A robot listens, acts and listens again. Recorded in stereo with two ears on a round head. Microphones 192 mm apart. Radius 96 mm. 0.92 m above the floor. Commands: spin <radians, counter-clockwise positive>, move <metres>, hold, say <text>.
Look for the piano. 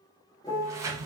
spin 0.35
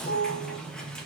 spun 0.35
spin 2.44
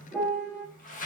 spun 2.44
spin 0.17
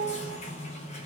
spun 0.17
say Found it: a piano, straight ahead.